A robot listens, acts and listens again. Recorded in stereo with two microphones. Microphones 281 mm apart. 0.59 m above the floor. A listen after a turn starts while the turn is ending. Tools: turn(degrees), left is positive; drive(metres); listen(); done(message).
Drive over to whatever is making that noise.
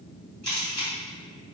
turn(degrees=-75)
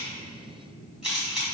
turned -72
drive(metres=1.0)
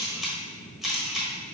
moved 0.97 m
drive(metres=1.0)
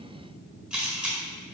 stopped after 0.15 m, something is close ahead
done("I am next to the camera shutter.")